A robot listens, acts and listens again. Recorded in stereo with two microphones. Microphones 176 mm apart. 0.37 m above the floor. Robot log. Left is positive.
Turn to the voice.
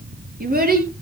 note: The child speaking: about 60° right or 120° right.
cmd yaw -60
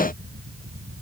cmd idle
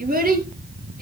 note: So it is at 55° right.
cmd yaw -55
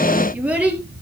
end: Facing the child speaking.